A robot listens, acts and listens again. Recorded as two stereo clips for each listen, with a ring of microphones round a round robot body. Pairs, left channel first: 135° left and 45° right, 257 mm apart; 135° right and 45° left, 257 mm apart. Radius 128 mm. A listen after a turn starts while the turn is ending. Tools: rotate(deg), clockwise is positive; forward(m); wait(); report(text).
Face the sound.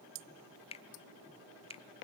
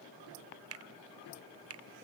rotate(-70)
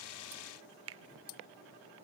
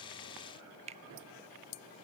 rotate(20)
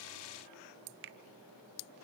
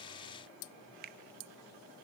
report("Found it: a finger snap, straight ahead.")